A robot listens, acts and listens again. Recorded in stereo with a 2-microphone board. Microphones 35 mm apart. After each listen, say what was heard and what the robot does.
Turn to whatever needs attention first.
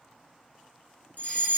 The fire alarm: about 55° left or 125° left. Turn 55° left.
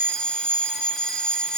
So it is at 50° left. Turn 50° left.
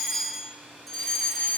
Facing the fire alarm, 1 to 2 m away.